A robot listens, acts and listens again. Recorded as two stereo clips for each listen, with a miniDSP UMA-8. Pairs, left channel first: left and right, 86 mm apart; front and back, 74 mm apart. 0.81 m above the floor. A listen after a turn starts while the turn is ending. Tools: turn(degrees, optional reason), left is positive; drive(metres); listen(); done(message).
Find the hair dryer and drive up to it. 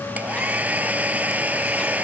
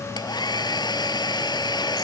turn(degrees=-15, reason="The hair dryer: 15° right.")
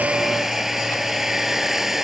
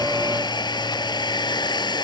drive(metres=1.0)
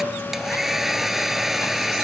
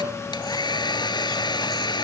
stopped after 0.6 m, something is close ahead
done("Something is in my way. I am facing the hair dryer but have not reached it.")